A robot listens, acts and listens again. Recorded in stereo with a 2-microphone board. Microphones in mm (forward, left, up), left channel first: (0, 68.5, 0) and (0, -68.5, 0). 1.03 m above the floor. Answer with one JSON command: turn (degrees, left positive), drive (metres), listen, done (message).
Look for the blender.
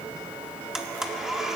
{"turn": -30}
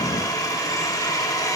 {"turn": 25}
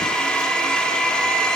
{"done": "Found it: a blender, straight ahead, 1 to 2 m away."}